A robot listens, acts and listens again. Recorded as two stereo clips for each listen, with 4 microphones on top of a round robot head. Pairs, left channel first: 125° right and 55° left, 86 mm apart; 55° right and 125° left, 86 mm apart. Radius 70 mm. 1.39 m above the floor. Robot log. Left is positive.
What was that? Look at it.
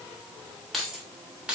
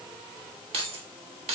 note: The keys jangling: 135° left.
cmd yaw +135
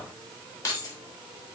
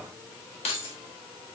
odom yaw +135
note: The keys jangling is now 75° right.
cmd yaw -75
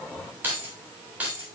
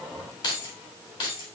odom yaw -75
note: The keys jangling is now 20° right.
cmd yaw -20
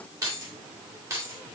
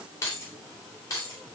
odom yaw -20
end: Facing the keys jangling.